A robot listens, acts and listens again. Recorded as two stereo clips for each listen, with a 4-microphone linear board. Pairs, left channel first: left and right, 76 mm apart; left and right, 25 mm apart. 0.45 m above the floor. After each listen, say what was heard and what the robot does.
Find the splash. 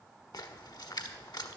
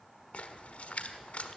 The splash: about 65° left or 115° left. Turn 65° left.
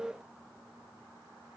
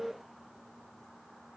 Keep listening.
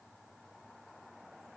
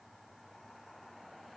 I heard a splash, but can't make it out now. It was about straight ahead or 50° left.